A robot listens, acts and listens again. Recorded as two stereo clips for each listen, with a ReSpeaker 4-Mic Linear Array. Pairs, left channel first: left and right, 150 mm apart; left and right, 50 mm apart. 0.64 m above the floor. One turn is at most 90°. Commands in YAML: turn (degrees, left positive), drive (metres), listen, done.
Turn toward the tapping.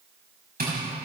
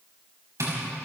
turn: -90
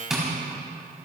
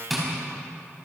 done: "Found it: tapping, straight ahead, over 4 m away."